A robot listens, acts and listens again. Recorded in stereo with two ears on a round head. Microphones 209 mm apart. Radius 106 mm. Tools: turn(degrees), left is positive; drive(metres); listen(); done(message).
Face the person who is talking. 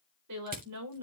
turn(degrees=-75)
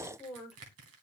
done("Found it: a woman speaking, straight ahead.")